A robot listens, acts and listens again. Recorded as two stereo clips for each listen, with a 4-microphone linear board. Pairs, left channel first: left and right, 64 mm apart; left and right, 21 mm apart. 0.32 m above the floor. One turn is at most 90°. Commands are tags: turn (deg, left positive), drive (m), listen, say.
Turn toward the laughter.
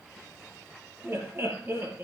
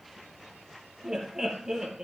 <turn deg="-35"/>
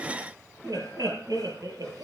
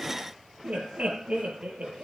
<turn deg="-90"/>
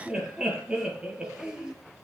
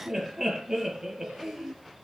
<turn deg="-15"/>
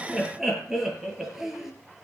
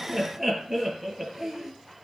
<say>Facing the laughter, over 4 m away.</say>